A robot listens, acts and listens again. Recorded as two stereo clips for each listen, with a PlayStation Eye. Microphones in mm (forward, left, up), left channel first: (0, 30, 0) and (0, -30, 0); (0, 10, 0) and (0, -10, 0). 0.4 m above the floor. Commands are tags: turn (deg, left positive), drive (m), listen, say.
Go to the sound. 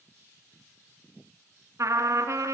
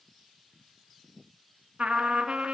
<turn deg="-60"/>
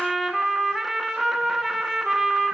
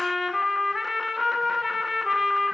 <drive m="1.0"/>
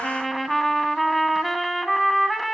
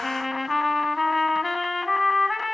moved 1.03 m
<drive m="1.0"/>
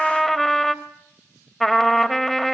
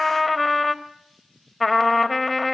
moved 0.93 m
<drive m="1.0"/>
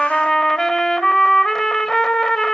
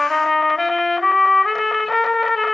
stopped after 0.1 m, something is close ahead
<turn deg="10"/>
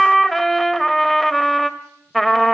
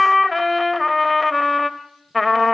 <say>I am next to the trumpet.</say>